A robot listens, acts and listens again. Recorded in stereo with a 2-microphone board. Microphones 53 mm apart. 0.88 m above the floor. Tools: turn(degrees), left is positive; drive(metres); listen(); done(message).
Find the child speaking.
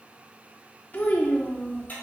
turn(degrees=30)
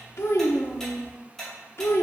turn(degrees=120)
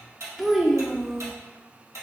done("Found it: a child speaking, straight ahead.")